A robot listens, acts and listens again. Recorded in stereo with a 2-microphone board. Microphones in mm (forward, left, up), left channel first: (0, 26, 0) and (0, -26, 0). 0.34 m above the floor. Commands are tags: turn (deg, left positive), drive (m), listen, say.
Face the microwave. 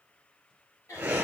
<listen/>
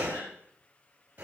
<listen/>
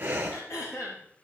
<say>I can't make out a microwave, only throat clearing and breathing.</say>